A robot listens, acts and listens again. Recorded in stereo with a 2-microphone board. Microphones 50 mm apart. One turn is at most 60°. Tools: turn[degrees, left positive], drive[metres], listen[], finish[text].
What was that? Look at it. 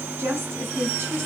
Thought: The woman speaking: about 55° right or 125° right.
Action: turn[-55]
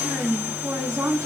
Thought: So it is at 75° right.
Action: turn[-60]
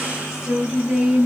Thought: The woman speaking is now 15° right.
Action: turn[-15]
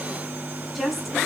Action: finish[Facing the woman speaking.]